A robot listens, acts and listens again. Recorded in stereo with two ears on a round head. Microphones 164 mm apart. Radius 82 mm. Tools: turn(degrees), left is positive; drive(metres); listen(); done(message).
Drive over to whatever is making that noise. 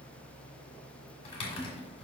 turn(degrees=35)
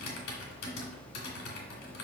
turn(degrees=110)
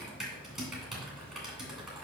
drive(metres=1.0)
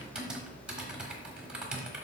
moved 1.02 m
drive(metres=1.0)
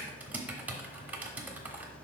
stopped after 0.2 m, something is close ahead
turn(degrees=-10)
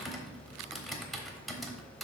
done("I am next to the typing on a keyboard.")